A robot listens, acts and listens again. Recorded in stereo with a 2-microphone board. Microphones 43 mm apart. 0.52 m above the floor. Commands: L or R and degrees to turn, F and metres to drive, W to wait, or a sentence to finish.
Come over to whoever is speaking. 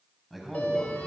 L30
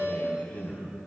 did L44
L140
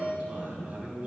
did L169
R30
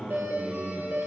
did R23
R10
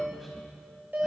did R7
W
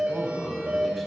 F1.0
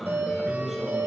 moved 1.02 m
F1.0
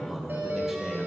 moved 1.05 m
F1.0
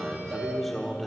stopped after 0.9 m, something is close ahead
I am next to the man speaking.